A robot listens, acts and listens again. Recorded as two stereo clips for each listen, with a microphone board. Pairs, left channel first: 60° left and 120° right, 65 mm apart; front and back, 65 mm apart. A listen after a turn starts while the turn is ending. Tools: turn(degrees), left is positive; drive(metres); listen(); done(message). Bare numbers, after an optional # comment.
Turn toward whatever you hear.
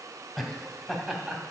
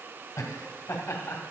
# The laughter: 40° right.
turn(-40)
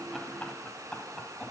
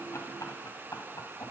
# The laughter is now 20° right.
turn(-20)
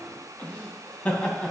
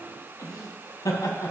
# The laughter is now 15° right.
turn(-15)
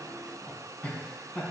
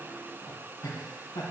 # The laughter is now 15° right.
turn(-15)
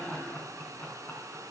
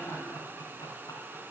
done("Facing the laughter.")